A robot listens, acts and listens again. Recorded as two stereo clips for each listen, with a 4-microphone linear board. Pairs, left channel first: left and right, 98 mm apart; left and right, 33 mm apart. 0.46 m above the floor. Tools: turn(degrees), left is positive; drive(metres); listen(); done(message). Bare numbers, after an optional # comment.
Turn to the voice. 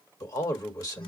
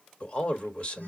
# The man speaking: about 35° left or 145° left.
turn(35)
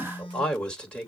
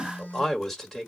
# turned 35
# So it is at 10° left.
turn(10)
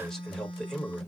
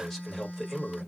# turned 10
done("Found it: a man speaking, straight ahead, 1 to 2 m away.")